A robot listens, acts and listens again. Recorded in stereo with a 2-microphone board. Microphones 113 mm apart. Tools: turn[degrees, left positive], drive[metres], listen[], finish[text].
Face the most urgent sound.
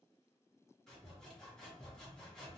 Action: listen[]
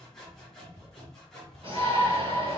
Thought: The shout: about 55° right or 125° right.
Action: turn[-55]
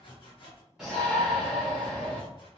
Action: finish[Found it: a shout, straight ahead, 1 to 2 m away.]